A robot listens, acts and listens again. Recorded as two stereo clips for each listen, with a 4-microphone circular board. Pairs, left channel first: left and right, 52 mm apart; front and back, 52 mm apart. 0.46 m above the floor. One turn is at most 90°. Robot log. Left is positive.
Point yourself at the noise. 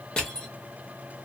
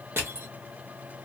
note: The crushing: 160° left.
cmd yaw +90
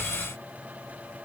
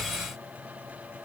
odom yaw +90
note: Nothing new. It was at 70° left.
cmd yaw +70
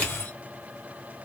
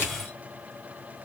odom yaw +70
note: The crushing is now 35° left.
cmd yaw +35
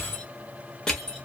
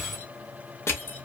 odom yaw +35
note: The crushing is now 20° left.
cmd yaw +20
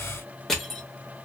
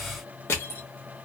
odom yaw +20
end: Facing the crushing, under 1 m away.